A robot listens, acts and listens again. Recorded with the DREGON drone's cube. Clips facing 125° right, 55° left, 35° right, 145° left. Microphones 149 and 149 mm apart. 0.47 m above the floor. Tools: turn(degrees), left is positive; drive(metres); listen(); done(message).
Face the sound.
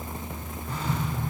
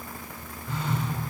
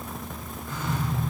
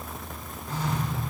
turn(degrees=-165)
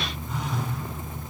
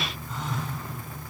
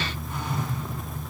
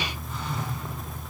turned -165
turn(degrees=-35)
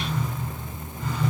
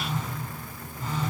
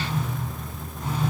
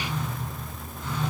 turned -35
done("Found it: a phone buzzing, straight ahead.")